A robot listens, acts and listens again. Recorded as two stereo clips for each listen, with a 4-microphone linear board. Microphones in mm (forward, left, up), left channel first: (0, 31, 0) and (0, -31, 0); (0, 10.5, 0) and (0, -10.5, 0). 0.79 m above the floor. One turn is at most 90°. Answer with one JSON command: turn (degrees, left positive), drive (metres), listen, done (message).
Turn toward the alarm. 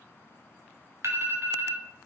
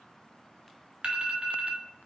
{"turn": -55}
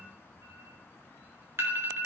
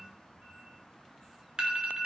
{"turn": -55}
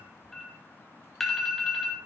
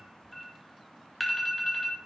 {"done": "Facing the alarm, 2 to 4 m away."}